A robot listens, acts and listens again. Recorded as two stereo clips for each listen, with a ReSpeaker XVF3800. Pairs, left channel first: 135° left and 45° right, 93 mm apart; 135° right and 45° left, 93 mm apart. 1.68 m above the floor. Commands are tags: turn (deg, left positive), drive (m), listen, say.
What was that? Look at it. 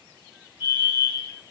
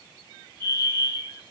<turn deg="160"/>
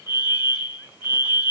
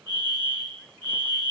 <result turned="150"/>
<turn deg="10"/>
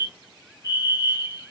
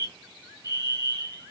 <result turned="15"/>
<say>Found it: a fire alarm, straight ahead, 2 to 4 m away.</say>